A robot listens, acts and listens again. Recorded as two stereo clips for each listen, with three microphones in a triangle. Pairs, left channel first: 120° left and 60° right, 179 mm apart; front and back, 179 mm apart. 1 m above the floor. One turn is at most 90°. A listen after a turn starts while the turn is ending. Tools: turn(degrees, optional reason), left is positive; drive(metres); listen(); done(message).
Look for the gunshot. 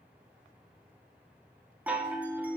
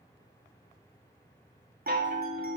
listen()
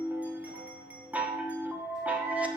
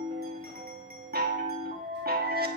listen()
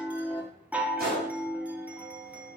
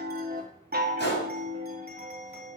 turn(degrees=-25, reason="The gunshot: 25° right.")
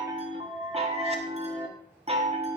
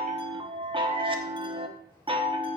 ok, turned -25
done("Facing where the gunshot came from. I can't hear it now.")